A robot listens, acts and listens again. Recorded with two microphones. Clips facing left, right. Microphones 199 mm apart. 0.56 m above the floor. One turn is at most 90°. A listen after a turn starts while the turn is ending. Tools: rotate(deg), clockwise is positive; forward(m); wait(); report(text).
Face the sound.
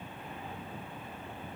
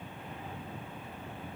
wait()
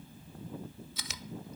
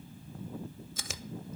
rotate(45)
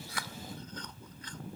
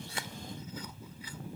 wait()
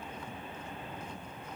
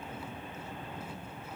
wait()
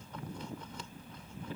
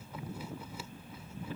report("I heard chewing, but can't make it out now. It was about straight ahead or 90° right.")